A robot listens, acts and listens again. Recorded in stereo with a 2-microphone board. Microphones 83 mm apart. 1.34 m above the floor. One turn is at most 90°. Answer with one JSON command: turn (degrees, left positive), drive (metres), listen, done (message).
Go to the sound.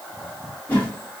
{"turn": 20}
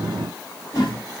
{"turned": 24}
{"turn": 90}
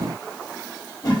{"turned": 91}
{"turn": 45}
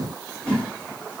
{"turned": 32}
{"turn": 15}
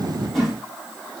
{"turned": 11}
{"drive": 1.0}
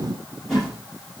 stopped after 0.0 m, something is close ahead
{"done": "Blocked. The whoosh is further on, straight ahead."}